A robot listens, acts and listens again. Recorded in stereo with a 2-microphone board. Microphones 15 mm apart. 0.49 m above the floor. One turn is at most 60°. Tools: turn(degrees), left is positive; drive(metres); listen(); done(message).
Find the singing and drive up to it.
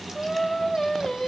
turn(degrees=45)
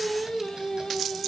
turn(degrees=60)
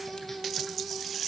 drive(metres=1.0)
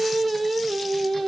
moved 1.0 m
drive(metres=1.0)
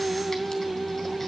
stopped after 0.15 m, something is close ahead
done("Arrived at the singing, straight ahead.")